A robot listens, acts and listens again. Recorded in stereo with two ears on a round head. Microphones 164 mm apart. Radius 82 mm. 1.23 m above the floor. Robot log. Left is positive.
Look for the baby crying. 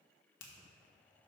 cmd idle
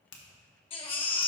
note: The baby crying: about 30° left or 150° left.
cmd yaw +30
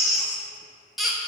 end: Facing the baby crying, under 1 m away.